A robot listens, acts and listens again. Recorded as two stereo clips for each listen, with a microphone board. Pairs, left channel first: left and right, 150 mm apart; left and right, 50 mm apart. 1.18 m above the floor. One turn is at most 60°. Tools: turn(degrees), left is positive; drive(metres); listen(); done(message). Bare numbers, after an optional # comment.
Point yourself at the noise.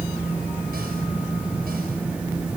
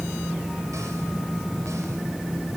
listen()
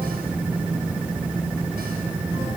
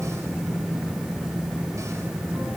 listen()
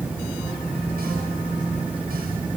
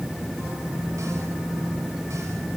done("I can't make out anything.")